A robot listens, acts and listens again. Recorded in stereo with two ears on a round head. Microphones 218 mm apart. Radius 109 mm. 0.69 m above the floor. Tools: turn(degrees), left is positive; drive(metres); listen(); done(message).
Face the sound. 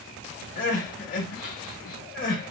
turn(degrees=35)
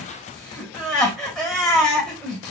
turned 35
done("Found it: crying, straight ahead.")